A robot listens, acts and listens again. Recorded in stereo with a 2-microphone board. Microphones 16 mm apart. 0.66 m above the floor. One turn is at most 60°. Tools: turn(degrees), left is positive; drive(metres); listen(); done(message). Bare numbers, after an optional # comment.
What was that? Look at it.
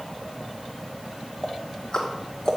# The ticking: about 40° left or 140° left.
turn(40)
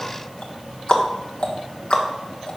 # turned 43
# So it is at 90° left.
turn(60)
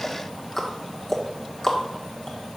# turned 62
# The ticking is now 30° left.
turn(30)
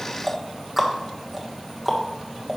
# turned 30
done("Facing the ticking.")